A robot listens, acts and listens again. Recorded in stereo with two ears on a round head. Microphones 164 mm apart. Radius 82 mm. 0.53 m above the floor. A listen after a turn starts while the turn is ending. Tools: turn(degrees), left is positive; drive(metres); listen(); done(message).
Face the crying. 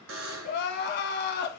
turn(degrees=55)
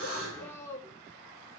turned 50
turn(degrees=15)
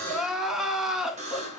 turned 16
done("Facing the crying.")